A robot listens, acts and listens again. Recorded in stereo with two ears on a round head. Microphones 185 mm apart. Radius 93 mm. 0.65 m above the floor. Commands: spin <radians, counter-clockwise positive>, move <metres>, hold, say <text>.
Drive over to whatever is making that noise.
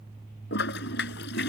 spin 1.05
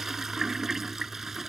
move 1.0
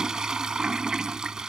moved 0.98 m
move 1.0
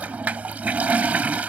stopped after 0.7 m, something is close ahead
spin -0.17
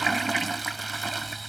say Arrived at the toilet flushing, straight ahead.